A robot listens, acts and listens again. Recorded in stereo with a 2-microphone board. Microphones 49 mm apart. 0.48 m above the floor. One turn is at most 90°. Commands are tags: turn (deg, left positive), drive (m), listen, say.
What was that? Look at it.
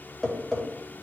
<turn deg="30"/>
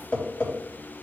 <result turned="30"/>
<turn deg="90"/>
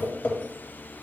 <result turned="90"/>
<turn deg="50"/>
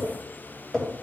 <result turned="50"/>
<say>Facing the tapping.</say>